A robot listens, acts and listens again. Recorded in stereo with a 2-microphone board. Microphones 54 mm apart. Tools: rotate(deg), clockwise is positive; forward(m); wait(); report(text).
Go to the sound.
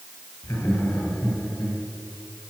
rotate(-70)
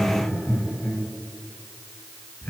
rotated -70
rotate(-40)
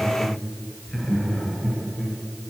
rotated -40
forward(1.0)
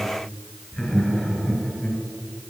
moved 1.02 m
rotate(-10)
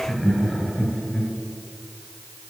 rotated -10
forward(1.0)
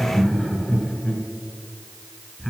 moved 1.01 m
forward(1.0)
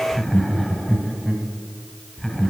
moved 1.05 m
forward(1.0)
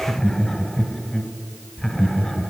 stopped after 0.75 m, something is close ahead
rotate(-10)
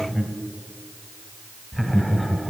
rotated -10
report("I am next to the laughter.")